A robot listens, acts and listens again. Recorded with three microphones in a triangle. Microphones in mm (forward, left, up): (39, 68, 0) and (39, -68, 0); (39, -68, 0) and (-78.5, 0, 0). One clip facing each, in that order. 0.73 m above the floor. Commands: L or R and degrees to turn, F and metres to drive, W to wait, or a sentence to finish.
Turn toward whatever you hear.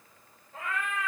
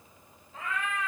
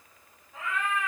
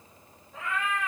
L55
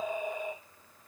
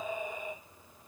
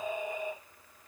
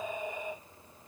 Found it: a cat meowing, straight ahead, 2 to 4 m away.